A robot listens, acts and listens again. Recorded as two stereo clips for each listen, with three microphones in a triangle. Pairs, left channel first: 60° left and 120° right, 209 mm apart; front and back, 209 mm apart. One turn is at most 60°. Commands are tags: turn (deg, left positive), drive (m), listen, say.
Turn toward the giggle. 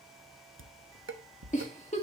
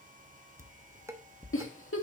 <say>Found it: a giggle, straight ahead, 2 to 4 m away.</say>